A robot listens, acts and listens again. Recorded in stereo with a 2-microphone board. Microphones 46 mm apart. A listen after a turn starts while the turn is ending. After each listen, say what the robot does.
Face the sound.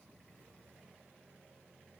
Keep listening.
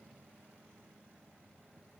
Keep listening.
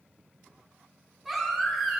Turn 30° left.
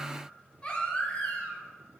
Turn 155° left.
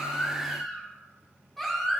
Facing the baby crying.